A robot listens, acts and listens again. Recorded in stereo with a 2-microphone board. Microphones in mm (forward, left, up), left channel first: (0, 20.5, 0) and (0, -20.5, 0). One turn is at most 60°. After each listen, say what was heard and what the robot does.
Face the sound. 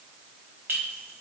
The clink: about 70° right or 110° right. Turn 60° right.
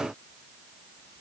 Keep listening.
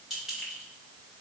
So it is at 10° right. Turn 10° right.
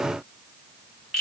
Found it: a clink, straight ahead.